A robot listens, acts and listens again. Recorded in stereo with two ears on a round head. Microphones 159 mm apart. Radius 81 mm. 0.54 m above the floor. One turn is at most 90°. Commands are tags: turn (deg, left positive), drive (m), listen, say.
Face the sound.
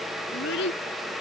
<turn deg="65"/>
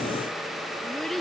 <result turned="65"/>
<say>Facing the child speaking.</say>